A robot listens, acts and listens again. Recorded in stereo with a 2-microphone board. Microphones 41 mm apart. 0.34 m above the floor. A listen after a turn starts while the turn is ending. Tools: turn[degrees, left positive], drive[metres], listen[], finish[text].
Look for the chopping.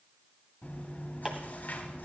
Thought: The chopping: about 15° right or 165° right.
Action: turn[-15]
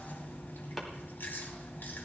Action: listen[]
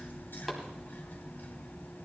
Action: listen[]
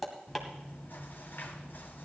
Action: finish[Facing the chopping.]